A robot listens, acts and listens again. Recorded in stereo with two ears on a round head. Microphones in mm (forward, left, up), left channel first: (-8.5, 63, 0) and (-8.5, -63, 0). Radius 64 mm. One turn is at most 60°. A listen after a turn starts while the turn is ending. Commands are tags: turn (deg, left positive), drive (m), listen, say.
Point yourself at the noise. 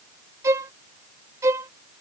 <turn deg="-20"/>
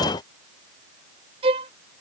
<turn deg="-60"/>
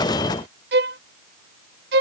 <turn deg="-60"/>
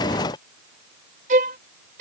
<turn deg="-55"/>
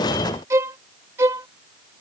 <turn deg="-20"/>
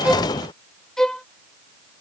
<say>Found it: a violin, straight ahead.</say>